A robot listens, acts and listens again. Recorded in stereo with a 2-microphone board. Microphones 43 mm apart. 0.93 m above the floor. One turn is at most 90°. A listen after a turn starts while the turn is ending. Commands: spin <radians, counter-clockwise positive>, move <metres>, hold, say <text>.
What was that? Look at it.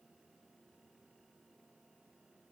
hold
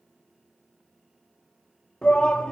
spin 0.44
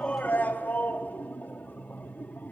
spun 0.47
spin 1.57
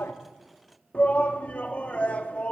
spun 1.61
spin 0.61
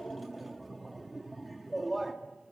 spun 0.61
say Found it: a shout, straight ahead.